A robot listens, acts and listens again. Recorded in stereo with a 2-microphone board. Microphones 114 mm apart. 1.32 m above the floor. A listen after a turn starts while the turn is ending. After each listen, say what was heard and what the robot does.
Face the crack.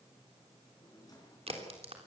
The crack: about 60° right or 120° right. Turn 60° right.
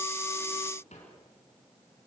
Keep listening.
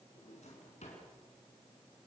I heard a crack, but can't make it out now. It was about straight ahead or 60° right.